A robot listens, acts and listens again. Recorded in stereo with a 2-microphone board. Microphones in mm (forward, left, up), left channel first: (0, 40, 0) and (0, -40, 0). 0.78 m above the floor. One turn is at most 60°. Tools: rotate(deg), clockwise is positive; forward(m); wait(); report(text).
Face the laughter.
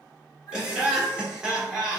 rotate(30)
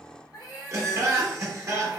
rotate(60)
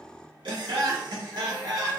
rotate(60)
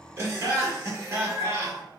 rotate(35)
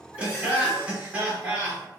rotate(15)
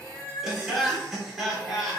report("Found it: laughter, straight ahead.")